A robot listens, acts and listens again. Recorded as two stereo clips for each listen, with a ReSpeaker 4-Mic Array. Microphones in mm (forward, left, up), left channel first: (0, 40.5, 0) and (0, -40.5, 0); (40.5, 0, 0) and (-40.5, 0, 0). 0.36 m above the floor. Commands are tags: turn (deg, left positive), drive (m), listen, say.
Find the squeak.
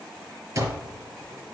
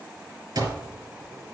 <listen/>
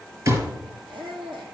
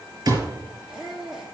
<turn deg="-95"/>
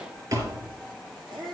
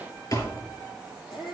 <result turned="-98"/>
<say>Found it: a squeak, straight ahead.</say>